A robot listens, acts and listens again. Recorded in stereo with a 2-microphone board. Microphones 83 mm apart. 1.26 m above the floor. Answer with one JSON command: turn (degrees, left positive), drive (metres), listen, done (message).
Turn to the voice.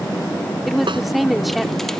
{"turn": 30}
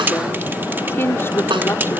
{"turn": 150}
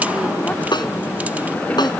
{"listen": true}
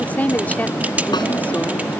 {"turn": 20}
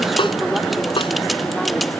{"listen": true}
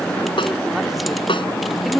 {"done": "Found it: a woman speaking, straight ahead."}